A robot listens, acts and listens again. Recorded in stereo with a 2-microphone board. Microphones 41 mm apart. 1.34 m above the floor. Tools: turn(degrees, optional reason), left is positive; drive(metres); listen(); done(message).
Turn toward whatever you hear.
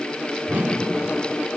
turn(degrees=-50, reason="The whoosh: about 50° right or 130° right.")
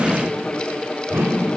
turn(degrees=-80, reason="So it is at 80° right.")
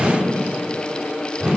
turn(degrees=-20, reason="The whoosh is now 20° right.")
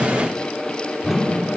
done("Found it: a whoosh, straight ahead.")